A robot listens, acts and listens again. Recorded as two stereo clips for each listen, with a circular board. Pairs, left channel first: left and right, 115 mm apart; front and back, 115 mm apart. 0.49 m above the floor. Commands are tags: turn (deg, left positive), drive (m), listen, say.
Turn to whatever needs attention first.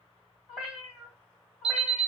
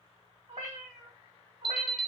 <turn deg="-85"/>
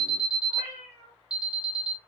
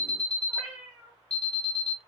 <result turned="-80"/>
<say>Facing the alarm, 1 to 2 m away.</say>